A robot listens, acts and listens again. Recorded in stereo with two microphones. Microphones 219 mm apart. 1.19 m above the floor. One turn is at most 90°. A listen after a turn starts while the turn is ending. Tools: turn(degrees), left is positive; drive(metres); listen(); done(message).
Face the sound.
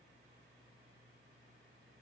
listen()
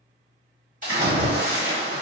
turn(degrees=-35)
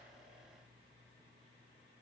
listen()
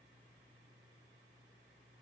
done("I heard a splash, but can't make it out now. It was about straight ahead or 110° right.")